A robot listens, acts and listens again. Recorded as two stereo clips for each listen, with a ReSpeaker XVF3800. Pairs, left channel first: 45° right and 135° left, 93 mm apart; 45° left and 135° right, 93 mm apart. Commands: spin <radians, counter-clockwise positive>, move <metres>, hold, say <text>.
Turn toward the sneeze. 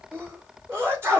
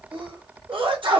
spin -2.79
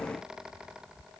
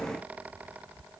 say Facing where the sneeze came from. I can't hear it now.